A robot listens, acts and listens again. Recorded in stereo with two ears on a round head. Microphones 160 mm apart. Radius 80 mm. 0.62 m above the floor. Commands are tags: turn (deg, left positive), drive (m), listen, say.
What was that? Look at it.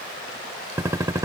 <turn deg="-15"/>
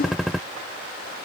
<say>Facing the gunshot.</say>